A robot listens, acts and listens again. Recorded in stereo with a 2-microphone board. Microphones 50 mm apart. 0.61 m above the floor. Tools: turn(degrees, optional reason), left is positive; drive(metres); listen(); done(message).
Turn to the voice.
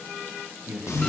turn(degrees=-55, reason="The man speaking: about 55° right or 125° right.")
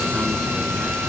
listen()
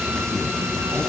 listen()
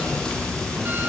done("I heard a man speaking, but can't make it out now. It was about straight ahead or 70° right.")